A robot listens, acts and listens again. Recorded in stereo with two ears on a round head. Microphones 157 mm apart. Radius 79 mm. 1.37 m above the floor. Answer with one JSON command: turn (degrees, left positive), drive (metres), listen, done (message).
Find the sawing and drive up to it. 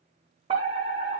{"listen": true}
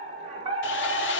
{"turn": 90}
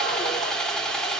{"drive": 1.0}
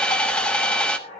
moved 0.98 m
{"drive": 1.0}
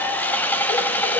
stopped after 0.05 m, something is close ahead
{"turn": 10}
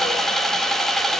{"done": "I am next to the sawing."}